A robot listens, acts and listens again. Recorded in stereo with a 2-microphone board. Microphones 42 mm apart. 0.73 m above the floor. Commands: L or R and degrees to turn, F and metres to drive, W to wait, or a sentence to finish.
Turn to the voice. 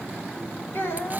L55
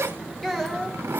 Found it: a child speaking, straight ahead, 2 to 4 m away.